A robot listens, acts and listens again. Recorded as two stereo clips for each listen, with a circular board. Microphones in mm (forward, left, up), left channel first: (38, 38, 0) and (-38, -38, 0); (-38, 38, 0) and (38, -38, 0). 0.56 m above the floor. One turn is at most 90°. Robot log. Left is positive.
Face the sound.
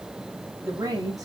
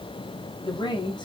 note: The woman speaking: 175° left.
cmd yaw +90
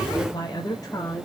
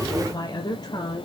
note: The woman speaking is now 100° left.
cmd yaw +90
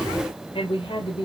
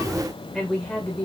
note: The woman speaking is now 60° left.
cmd yaw +60
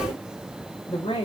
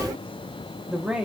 note: The woman speaking is now 35° left.
cmd yaw +35
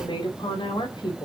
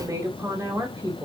note: The woman speaking is now 10° left.
cmd yaw +10
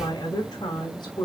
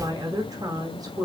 end: Facing the woman speaking, 2 to 4 m away.